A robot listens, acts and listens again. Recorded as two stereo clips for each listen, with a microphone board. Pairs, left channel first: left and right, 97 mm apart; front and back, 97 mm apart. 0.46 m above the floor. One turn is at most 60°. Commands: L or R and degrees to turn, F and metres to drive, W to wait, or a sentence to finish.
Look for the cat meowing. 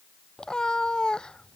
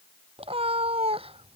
L60
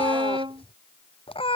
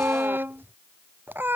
L60
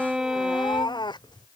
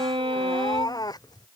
L50
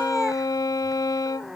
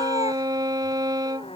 Found it: a cat meowing, straight ahead.